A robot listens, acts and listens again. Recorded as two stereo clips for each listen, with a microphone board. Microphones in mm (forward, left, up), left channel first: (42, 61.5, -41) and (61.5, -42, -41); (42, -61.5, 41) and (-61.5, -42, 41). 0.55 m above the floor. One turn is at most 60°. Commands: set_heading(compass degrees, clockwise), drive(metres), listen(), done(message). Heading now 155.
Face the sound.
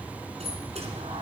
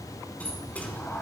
set_heading(215)
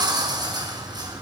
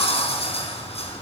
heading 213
set_heading(243)
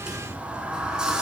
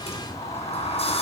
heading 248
done("Found it: a sliding door, straight ahead.")